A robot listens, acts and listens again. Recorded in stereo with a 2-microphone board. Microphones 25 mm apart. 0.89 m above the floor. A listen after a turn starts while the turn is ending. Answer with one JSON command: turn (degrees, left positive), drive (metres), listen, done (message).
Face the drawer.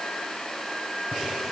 {"listen": true}
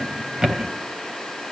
{"turn": -30}
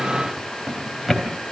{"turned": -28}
{"done": "Facing the drawer, 2 to 4 m away."}